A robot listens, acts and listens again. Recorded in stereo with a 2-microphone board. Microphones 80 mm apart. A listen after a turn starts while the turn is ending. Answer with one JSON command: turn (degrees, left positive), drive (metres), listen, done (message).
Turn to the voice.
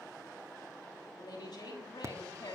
{"turn": 90}
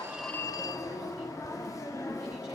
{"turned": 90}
{"listen": true}
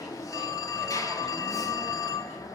{"listen": true}
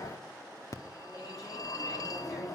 {"done": "I heard a woman speaking from this way, but can't make it out now."}